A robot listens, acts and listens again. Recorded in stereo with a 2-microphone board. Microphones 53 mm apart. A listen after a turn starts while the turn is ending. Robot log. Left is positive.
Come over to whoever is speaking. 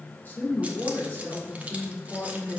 note: The woman speaking: about 35° left or 145° left.
cmd yaw +35
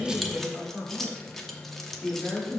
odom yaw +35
cmd fwd 1.0
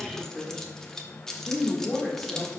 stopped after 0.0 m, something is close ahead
end: Blocked. The woman speaking is further on, straight ahead.